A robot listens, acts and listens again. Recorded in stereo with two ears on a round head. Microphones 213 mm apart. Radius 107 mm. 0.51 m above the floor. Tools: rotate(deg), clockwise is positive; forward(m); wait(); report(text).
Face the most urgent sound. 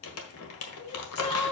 rotate(-20)
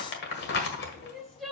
report("Facing the crying.")